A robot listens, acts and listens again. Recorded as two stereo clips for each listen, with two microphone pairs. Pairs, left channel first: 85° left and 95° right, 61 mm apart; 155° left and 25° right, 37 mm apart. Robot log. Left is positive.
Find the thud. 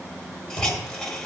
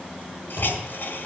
end: Facing the thud.